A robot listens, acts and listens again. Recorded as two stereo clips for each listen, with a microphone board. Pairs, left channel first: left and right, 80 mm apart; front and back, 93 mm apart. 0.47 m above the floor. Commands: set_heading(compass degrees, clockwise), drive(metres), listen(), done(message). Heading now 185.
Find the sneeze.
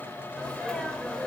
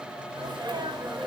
set_heading(20)
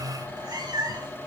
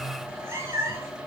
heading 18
done("Facing where the sneeze came from. I can't hear it now.")